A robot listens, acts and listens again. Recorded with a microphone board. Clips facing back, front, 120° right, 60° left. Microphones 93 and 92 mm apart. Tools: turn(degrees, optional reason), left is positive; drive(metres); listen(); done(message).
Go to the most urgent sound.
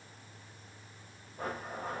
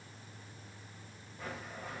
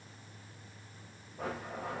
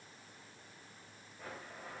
listen()
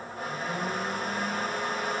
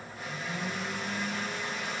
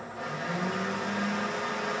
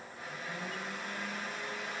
listen()
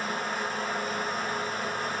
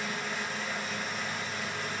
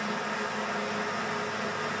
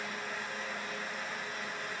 done("I can't make out anything urgent, only a blender.")